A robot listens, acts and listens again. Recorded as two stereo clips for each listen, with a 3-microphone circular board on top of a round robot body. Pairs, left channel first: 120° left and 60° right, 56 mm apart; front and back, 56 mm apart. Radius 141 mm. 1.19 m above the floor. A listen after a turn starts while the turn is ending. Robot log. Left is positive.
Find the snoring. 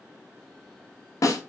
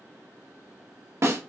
cmd idle
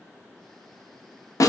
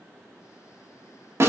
cmd idle
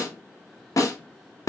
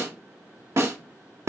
end: I can't make out snoring, only a snare drum.